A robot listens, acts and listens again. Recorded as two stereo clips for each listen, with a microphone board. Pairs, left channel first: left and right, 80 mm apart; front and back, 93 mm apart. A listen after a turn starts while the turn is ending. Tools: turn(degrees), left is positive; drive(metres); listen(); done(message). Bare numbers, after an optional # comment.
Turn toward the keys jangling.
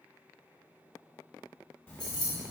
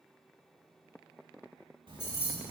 # The keys jangling: 60° left.
turn(60)
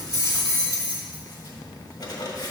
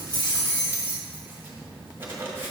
# The keys jangling is now 15° left.
turn(15)
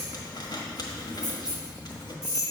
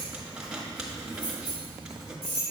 # The keys jangling is now 10° right.
turn(-10)
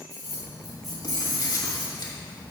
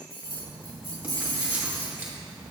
done("Facing the keys jangling, 2 to 4 m away.")